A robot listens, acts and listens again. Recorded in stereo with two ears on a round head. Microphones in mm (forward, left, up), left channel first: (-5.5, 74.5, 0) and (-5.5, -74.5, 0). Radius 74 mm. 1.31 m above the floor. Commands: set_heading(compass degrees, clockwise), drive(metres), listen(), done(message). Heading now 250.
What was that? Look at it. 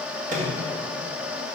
set_heading(300)
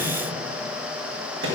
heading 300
set_heading(20)
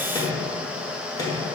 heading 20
set_heading(355)
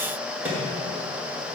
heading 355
set_heading(5)
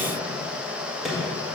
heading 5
done("Facing the microwave.")